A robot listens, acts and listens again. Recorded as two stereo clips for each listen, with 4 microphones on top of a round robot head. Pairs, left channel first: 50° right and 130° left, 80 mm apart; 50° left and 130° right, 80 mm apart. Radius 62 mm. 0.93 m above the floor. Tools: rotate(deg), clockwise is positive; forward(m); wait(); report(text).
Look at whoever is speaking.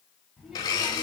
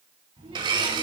rotate(145)
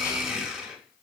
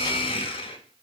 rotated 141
wait()
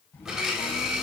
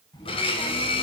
rotate(-15)
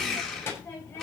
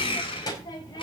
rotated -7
rotate(-10)
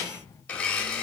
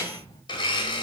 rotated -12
report("Facing the child speaking, over 4 m away.")